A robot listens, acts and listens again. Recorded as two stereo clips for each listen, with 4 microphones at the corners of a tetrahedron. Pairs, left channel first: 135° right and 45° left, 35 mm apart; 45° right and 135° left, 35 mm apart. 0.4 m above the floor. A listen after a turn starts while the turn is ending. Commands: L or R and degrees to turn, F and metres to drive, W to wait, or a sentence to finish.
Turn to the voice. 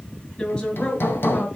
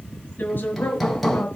R80
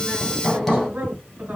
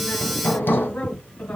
Found it: a woman speaking, straight ahead, over 4 m away.